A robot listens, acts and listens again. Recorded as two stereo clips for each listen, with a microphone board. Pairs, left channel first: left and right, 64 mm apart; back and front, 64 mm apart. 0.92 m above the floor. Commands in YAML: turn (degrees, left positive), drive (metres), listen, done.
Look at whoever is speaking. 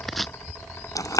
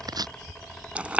listen: true
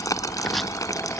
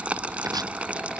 listen: true
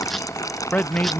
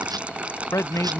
turn: 155
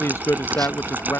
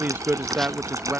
turn: 55
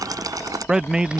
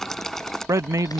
turn: -10
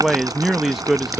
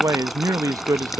done: "Facing the man speaking."